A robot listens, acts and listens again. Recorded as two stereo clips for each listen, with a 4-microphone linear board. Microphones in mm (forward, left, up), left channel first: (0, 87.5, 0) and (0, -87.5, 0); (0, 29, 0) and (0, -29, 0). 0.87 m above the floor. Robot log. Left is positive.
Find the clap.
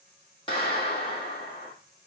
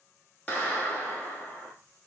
note: The clap: about 25° left or 155° left.
cmd yaw +25
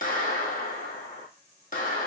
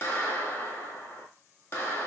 note: So it is at 125° left.
cmd yaw +125
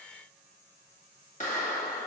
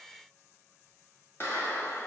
note: The clap is now 50° left.
cmd yaw +50
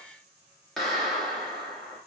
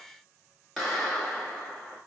end: Found it: a clap, straight ahead.